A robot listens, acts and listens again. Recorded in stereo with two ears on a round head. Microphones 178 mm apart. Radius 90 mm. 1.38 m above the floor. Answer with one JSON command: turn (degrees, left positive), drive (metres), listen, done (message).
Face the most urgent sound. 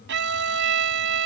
{"listen": true}
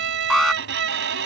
{"turn": 30}
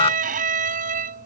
{"turn": 150}
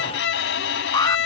{"turn": 20}
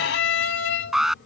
{"done": "Facing the alarm."}